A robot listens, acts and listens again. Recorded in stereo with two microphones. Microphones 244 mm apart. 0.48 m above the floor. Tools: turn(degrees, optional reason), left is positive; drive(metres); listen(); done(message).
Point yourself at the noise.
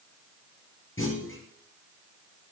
turn(degrees=60, reason="The clunk: about 60° left or 120° left.")
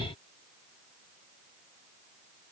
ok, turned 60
listen()
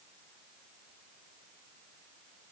done("I heard a clunk, but can't make it out now. It was about straight ahead or 60° left.")